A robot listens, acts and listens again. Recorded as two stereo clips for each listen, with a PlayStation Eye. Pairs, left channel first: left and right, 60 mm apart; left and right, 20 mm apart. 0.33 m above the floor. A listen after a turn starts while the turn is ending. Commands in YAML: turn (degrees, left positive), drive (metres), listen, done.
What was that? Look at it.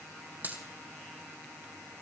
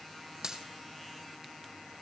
turn: -30
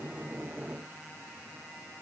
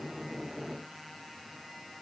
listen: true
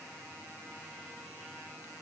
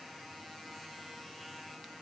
done: "I heard a dropped coin, but can't make it out now. It was about straight ahead or 120° right."